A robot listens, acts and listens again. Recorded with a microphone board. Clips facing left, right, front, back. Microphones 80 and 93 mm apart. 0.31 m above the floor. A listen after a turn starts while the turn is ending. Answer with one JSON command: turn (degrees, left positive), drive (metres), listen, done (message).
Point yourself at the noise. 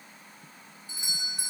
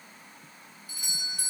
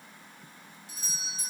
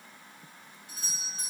{"turn": 155}
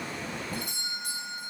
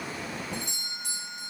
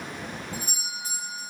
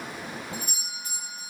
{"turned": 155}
{"turn": 50}
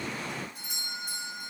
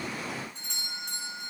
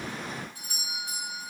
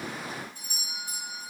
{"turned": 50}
{"turn": 10}
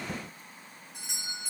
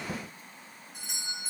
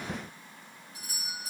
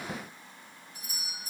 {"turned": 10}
{"done": "Facing the doorbell."}